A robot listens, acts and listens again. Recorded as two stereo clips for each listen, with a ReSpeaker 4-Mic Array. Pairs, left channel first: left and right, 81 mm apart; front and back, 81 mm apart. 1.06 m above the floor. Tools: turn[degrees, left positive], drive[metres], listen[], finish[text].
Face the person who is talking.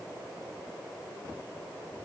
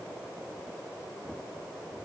Action: listen[]
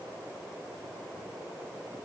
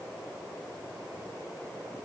Action: listen[]
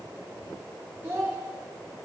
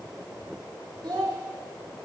Thought: The child speaking: 150° right.
Action: turn[-150]
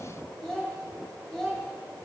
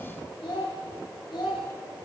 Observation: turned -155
Action: finish[Facing the child speaking.]